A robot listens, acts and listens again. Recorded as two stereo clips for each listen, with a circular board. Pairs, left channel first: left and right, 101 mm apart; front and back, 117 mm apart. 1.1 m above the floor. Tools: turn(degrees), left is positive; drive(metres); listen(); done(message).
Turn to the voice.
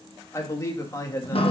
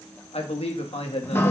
turn(degrees=30)
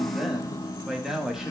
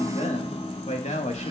done("Found it: a man speaking, straight ahead, 1 to 2 m away.")